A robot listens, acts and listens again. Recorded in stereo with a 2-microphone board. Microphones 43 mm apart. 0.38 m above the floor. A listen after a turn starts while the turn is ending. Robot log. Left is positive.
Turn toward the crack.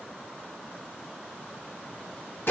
cmd idle
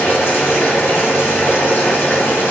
cmd idle
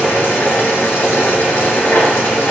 end: I can't make out a crack, only boiling.